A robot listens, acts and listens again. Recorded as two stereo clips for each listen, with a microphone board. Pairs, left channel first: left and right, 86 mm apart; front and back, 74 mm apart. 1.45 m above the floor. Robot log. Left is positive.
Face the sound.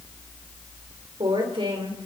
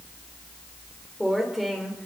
note: The woman speaking: 95° right.
cmd yaw -95
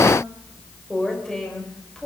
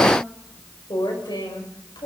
end: Found it: a woman speaking, straight ahead, over 4 m away.